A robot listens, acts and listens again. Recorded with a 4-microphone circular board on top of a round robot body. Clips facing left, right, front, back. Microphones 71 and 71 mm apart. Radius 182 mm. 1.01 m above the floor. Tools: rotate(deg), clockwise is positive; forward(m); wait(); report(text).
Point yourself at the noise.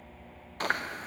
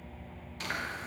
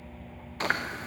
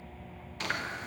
rotate(-50)
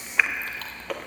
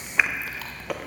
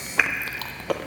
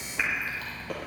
report("Found it: chewing, straight ahead.")